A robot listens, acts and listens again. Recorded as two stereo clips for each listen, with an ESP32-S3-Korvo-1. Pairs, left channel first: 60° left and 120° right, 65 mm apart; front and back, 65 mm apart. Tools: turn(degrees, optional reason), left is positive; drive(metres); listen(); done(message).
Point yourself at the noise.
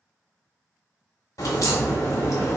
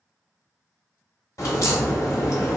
turn(degrees=35, reason="The crack: 35° left.")
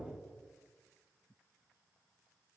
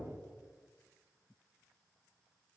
done("Facing where the crack came from. I can't hear it now.")